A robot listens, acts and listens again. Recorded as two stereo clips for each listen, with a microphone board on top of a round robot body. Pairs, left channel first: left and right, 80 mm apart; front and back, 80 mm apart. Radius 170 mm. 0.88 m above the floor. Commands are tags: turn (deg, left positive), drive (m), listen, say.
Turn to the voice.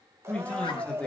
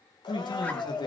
<turn deg="15"/>
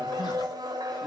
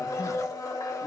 <listen/>
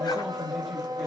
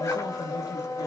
<listen/>
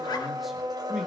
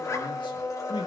<say>Facing where the man speaking came from. I can't hear it now.</say>